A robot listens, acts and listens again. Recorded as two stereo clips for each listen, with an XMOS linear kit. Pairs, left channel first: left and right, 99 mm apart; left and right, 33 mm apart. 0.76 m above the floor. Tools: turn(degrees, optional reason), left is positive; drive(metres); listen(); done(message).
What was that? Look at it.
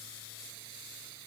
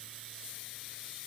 listen()
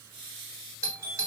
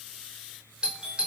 turn(degrees=-30, reason="The doorbell: about 30° right or 150° right.")
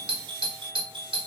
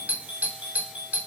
turn(degrees=-115, reason="So it is at 115° right.")
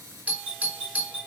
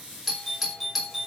turn(degrees=-15, reason="The doorbell is now 15° right.")
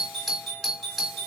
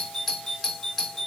done("Found it: a doorbell, straight ahead.")